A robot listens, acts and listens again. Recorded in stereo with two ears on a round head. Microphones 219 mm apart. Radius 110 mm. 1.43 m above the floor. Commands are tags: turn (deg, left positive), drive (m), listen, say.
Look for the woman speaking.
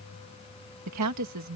<turn deg="-90"/>
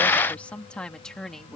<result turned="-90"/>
<say>Facing the woman speaking.</say>